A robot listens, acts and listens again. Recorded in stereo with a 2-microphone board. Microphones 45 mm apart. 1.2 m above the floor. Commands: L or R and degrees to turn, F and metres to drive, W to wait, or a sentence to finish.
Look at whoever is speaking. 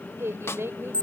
R90
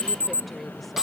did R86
W
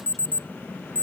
W
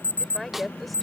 Found it: a woman speaking, straight ahead.